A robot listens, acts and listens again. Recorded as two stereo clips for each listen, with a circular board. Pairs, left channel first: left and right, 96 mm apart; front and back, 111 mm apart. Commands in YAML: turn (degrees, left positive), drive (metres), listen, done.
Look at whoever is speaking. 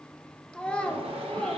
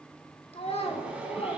turn: 10
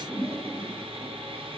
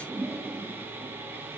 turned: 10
listen: true
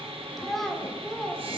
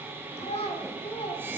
done: "Found it: a child speaking, straight ahead."